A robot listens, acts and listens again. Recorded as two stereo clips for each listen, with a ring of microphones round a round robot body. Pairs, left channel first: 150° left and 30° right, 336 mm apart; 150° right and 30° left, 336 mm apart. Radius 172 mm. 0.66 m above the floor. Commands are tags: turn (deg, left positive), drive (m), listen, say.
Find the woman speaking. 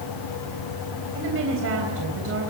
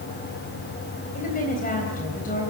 <turn deg="-85"/>
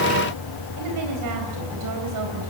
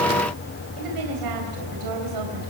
<say>Facing the woman speaking.</say>